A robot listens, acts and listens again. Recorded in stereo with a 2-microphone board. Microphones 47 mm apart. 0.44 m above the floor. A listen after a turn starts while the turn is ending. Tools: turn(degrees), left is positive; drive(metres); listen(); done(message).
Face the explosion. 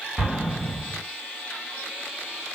turn(degrees=-25)
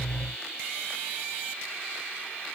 listen()
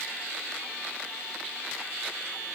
done("I heard an explosion, but can't make it out now. It was about straight ahead or 130° right.")